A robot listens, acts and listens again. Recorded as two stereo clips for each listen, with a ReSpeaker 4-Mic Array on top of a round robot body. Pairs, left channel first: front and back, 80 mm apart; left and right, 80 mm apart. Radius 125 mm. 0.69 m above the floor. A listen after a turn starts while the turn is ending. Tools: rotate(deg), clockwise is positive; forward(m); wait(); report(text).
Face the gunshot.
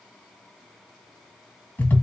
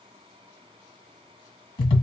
wait()
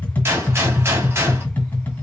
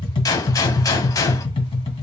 rotate(-125)
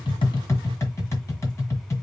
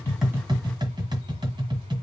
report("Facing where the gunshot came from. I can't hear it now.")